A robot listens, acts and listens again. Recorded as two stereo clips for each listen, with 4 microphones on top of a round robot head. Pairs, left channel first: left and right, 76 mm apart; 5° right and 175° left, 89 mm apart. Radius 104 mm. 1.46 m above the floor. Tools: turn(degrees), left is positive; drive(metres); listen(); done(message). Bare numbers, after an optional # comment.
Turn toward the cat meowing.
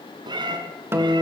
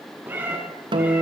# The cat meowing: 110° right.
turn(-110)
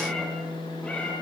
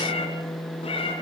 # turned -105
# The cat meowing is now 15° left.
turn(15)
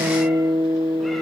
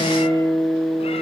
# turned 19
listen()
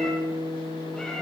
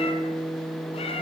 done("Found it: a cat meowing, straight ahead.")